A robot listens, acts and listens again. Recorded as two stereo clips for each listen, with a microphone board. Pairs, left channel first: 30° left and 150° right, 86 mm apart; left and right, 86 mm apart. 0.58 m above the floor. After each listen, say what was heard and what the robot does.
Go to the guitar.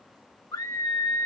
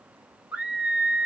Keep listening.
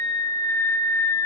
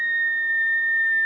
Keep listening.
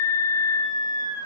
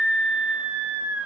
I can't make out a guitar to turn to.